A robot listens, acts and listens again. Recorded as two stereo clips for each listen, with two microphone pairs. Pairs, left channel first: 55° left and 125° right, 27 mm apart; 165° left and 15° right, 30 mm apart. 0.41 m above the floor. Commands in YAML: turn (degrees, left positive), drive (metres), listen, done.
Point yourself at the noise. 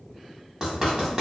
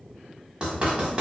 turn: -70
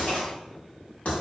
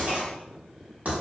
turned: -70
turn: 20
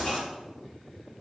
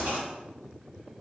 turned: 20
done: "Found it: writing, straight ahead, 1 to 2 m away."